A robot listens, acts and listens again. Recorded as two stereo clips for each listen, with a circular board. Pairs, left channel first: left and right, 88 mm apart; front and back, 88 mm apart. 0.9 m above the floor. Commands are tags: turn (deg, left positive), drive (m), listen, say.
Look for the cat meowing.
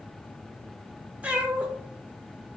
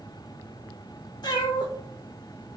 <turn deg="-20"/>
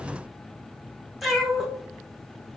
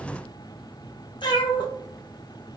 <say>Facing the cat meowing, under 1 m away.</say>